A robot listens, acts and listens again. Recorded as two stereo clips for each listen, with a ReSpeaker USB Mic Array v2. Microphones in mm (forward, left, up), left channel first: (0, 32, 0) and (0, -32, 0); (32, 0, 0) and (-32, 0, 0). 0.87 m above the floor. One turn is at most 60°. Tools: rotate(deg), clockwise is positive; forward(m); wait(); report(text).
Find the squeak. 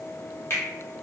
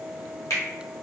wait()
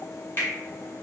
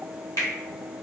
wait()
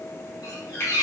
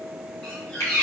rotate(-60)
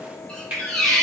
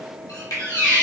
rotate(-10)
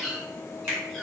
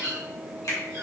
report("Facing the squeak, 1 to 2 m away.")